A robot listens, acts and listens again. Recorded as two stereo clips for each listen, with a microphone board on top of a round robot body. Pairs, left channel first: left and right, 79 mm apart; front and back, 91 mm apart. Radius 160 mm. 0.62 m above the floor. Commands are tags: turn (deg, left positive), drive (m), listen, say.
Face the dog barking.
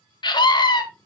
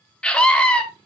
<listen/>
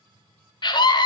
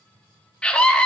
<listen/>
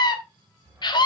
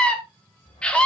<turn deg="-20"/>
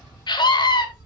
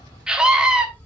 <turn deg="-10"/>
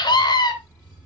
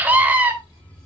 <turn deg="-10"/>
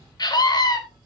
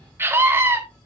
<turn deg="-10"/>
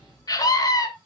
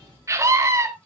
<say>Found it: a dog barking, straight ahead, 2 to 4 m away.</say>